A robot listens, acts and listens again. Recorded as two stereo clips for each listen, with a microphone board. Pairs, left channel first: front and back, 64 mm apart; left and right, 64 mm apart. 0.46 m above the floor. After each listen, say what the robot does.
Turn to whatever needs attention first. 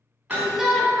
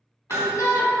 Turn 95° left.
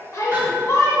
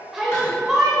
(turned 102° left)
Facing the shout.